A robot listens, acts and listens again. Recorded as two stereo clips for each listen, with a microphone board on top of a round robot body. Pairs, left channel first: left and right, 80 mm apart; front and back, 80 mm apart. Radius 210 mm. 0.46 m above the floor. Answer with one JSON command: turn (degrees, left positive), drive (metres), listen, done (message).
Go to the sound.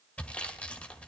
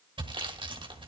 {"turn": 165}
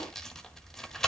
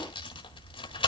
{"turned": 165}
{"drive": 1.0}
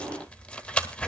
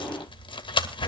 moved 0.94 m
{"turn": 15}
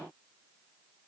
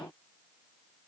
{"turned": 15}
{"listen": true}
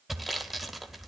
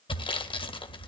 {"drive": 1.0}
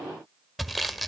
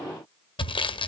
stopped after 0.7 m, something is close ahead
{"done": "I am next to the sawing."}